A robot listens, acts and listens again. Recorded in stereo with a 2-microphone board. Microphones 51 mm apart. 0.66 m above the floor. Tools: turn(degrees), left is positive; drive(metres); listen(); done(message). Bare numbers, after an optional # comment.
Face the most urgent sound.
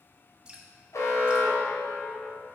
turn(90)
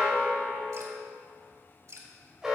# So it is at 10° right.
turn(-10)
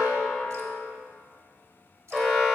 done("Facing the alarm, 1 to 2 m away.")